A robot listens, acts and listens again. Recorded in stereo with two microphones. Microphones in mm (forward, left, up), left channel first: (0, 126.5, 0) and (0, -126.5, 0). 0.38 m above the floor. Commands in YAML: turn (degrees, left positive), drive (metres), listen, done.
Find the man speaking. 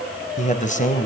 turn: 30
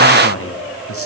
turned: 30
turn: 120
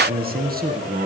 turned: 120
turn: -35
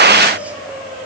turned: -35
listen: true
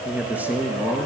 done: "Found it: a man speaking, straight ahead, over 4 m away."